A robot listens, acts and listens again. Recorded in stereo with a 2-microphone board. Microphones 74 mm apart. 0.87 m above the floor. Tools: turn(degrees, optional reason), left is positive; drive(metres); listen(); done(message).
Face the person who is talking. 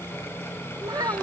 turn(degrees=-70, reason="The child speaking: about 70° right or 110° right.")
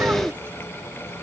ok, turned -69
listen()
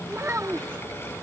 turn(degrees=-30, reason="So it is at 30° right.")
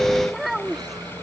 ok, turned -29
done("Facing the child speaking.")